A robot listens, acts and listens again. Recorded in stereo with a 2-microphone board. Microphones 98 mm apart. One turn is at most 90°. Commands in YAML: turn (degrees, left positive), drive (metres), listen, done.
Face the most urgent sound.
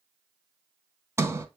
listen: true
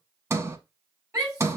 turn: -35
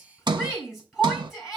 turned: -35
done: "Facing the shout, over 4 m away."